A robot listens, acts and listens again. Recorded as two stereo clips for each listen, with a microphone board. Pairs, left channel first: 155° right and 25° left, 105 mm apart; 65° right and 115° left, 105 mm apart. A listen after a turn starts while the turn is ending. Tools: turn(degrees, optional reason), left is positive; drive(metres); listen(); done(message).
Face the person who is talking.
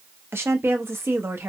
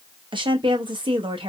turn(degrees=85, reason="The woman speaking: 85° left.")
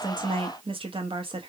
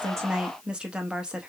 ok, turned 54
turn(degrees=35, reason="The woman speaking is now 35° left.")
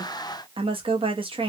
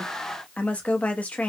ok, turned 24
turn(degrees=10, reason="The woman speaking is now 10° left.")
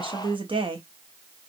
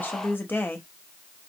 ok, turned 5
done("Facing the woman speaking, under 1 m away.")